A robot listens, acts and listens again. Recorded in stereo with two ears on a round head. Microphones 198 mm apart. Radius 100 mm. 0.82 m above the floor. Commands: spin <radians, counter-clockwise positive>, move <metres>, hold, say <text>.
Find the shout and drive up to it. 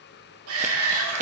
spin -1.13
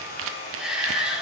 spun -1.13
move 1.0
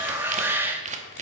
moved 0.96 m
spin -0.17
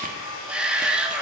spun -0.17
move 1.0
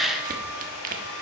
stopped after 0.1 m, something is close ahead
say I am next to the shout.